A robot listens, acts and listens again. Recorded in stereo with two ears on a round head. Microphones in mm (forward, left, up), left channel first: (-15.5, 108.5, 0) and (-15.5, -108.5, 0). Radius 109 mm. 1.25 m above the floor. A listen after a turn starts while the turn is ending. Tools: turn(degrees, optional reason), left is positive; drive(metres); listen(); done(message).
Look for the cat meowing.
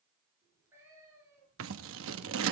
turn(degrees=-30)
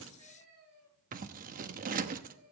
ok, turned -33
turn(degrees=-135, reason="So it is at 135° right.")
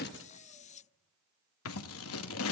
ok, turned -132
listen()
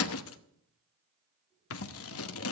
listen()
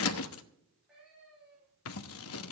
done("Found it: a cat meowing, straight ahead.")